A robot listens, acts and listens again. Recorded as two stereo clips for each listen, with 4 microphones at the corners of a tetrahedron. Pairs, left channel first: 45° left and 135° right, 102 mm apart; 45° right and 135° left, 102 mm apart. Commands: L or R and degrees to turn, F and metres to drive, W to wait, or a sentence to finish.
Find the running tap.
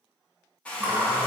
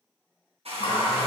R60
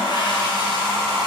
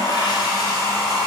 Facing the running tap, under 1 m away.